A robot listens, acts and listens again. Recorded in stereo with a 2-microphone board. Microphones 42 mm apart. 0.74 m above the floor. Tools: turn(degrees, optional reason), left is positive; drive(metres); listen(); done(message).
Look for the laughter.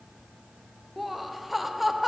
turn(degrees=30)
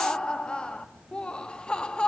turn(degrees=150, reason="So it is at 150° left.")
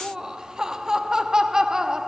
turn(degrees=-15, reason="The laughter is now 15° right.")
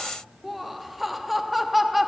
done("Facing the laughter, under 1 m away.")